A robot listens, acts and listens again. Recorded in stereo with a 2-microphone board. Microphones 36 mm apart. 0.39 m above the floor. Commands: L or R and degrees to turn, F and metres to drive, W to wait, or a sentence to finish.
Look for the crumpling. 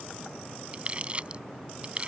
R30
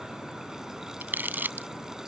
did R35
R110
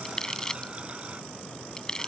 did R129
L20
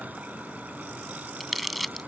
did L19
Facing the crumpling.